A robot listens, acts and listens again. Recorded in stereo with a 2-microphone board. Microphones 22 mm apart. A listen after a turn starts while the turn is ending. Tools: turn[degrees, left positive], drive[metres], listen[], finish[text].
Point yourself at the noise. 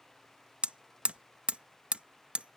Action: turn[-90]
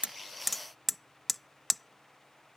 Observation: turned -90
Action: finish[Facing the hammering.]